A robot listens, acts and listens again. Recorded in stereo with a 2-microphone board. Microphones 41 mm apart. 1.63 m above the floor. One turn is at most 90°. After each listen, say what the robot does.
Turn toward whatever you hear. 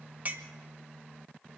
Turn 40° right.
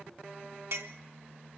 Turn 90° right.
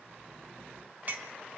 Turn 45° right.
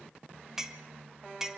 Turn 10° right.
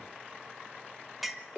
Found it: a clink, straight ahead.